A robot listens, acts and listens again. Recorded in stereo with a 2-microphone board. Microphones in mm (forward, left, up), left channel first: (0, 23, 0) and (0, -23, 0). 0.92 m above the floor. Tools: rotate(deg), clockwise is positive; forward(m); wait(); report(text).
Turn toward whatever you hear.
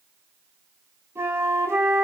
rotate(65)
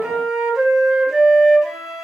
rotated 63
report("Found it: a flute, straight ahead, over 4 m away.")